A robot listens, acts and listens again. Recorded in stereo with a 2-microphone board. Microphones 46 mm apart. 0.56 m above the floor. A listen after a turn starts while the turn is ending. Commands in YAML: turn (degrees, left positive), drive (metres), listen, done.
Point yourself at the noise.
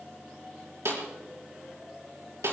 turn: -90
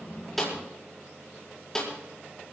turn: 10
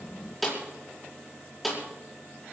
done: "Found it: a snare drum, straight ahead."